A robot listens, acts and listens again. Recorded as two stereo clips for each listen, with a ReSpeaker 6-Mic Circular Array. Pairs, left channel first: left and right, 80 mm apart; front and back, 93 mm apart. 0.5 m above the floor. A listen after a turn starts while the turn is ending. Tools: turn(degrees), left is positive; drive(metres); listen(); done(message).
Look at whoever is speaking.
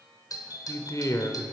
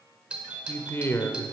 turn(degrees=60)
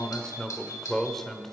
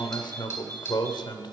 done("Facing the man speaking.")